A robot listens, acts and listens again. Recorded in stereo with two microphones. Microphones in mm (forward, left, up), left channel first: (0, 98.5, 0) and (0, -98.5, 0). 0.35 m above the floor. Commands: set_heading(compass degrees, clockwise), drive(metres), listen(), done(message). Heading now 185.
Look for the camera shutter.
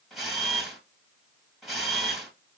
set_heading(155)
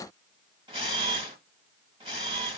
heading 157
set_heading(187)
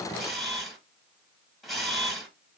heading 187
done("Facing the camera shutter, 1 to 2 m away.")